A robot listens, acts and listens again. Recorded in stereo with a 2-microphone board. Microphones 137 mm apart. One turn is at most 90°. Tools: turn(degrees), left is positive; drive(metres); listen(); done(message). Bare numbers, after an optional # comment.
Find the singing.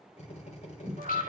turn(90)
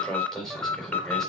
done("Facing the singing.")